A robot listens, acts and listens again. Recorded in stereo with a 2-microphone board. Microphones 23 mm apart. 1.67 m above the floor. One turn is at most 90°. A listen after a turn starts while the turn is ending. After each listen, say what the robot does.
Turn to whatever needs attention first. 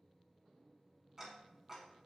Keep listening.
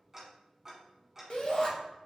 Turn 40° left.
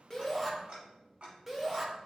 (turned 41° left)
Facing the shout, 1 to 2 m away.